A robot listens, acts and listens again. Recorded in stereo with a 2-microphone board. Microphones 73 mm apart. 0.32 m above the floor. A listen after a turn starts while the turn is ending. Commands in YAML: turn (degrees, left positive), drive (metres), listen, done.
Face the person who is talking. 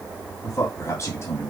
turn: 35
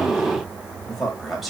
done: "Found it: a man speaking, straight ahead, 1 to 2 m away."